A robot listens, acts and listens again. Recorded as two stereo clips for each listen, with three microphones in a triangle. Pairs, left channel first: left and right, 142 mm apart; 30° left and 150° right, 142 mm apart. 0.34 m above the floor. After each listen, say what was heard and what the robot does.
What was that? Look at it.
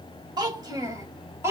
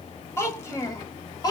The child speaking: 25° right. Turn 25° right.
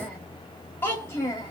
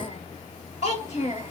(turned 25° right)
The child speaking is now 30° left. Turn 30° left.
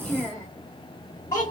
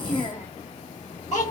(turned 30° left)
The child speaking is now 30° left. Turn 30° left.
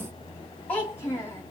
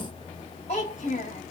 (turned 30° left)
The child speaking is now 20° left. Turn 20° left.
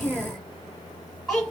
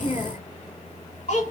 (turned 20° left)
Facing the child speaking.